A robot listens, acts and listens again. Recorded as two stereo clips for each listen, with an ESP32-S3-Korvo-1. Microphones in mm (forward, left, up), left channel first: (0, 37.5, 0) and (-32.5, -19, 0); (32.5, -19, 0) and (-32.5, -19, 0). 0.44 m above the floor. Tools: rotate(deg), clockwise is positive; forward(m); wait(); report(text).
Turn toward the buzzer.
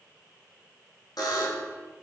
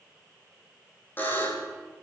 rotate(-60)
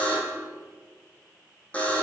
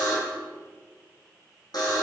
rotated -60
rotate(10)
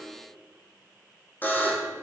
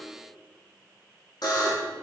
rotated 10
report("Facing the buzzer, over 4 m away.")